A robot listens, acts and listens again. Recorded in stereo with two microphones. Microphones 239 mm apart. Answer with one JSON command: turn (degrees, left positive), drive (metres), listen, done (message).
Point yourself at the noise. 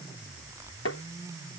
{"turn": 90}
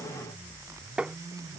{"done": "Facing the tapping."}